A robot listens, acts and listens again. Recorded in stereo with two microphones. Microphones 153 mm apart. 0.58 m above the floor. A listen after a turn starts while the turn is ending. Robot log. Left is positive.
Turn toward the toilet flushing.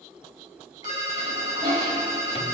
note: The toilet flushing: about 75° right or 105° right.
cmd yaw -75
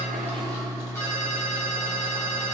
cmd idle
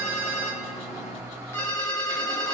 cmd idle
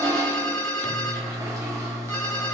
note: So it is at 25° right.
cmd yaw -25
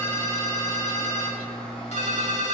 cmd idle
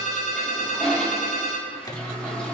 note: The toilet flushing is now 10° left.
cmd yaw +10
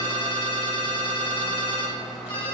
cmd idle
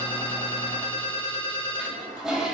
end: Found it: a toilet flushing, straight ahead, 2 to 4 m away.